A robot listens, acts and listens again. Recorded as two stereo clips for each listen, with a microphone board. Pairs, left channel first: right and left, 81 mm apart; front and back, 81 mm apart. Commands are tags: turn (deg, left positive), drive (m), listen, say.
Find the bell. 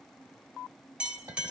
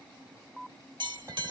<turn deg="165"/>
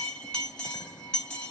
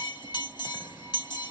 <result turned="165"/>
<turn deg="-15"/>
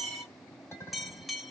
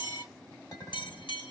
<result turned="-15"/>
<say>Facing the bell, 1 to 2 m away.</say>